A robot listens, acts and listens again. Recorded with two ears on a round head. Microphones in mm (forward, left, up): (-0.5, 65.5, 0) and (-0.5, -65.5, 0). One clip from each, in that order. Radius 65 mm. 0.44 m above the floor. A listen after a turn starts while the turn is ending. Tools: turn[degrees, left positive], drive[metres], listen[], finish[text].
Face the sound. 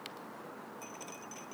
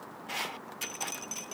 Thought: The dripping: about 65° right or 115° right.
Action: turn[-65]
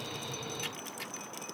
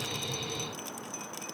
Action: listen[]
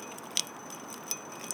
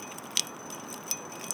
Action: finish[Facing the dripping.]